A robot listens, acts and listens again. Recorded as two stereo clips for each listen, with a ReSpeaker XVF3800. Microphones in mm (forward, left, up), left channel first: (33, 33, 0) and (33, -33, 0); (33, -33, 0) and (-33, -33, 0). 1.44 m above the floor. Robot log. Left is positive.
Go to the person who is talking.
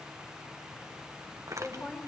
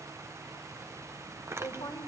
note: The woman speaking: 10° left.
cmd yaw +10
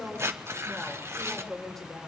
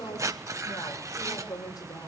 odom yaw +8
cmd fwd 1.0
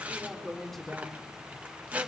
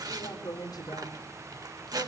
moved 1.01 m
cmd fwd 1.0
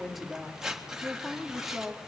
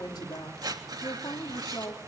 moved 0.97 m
cmd fwd 1.0
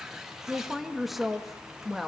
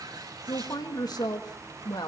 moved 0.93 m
cmd fwd 1.0
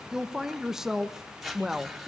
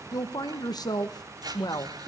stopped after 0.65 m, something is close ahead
end: I am next to the woman speaking.